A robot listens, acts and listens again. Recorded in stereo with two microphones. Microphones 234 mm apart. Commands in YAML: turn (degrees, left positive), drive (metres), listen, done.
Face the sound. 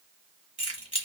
turn: -35
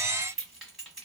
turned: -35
done: "Facing the keys jangling, 1 to 2 m away."